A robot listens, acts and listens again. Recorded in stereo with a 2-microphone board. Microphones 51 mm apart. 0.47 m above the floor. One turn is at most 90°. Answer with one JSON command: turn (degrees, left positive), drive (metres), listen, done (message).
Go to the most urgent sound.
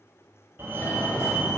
{"turn": -35}
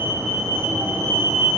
{"turn": -90}
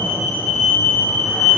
{"drive": 1.0}
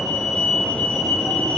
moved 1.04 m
{"drive": 1.0}
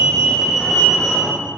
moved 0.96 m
{"drive": 1.0}
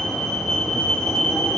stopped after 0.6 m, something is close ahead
{"turn": 10}
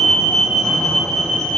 {"done": "Arrived at the fire alarm, straight ahead."}